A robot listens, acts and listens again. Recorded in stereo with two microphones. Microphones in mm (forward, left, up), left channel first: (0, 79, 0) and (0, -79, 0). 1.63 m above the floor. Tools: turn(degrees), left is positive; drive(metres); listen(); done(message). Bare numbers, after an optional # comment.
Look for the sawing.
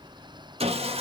# The sawing: about 35° right or 145° right.
turn(-35)
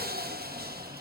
# So it is at 110° right.
turn(-110)
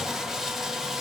done("Found it: sawing, straight ahead, under 1 m away.")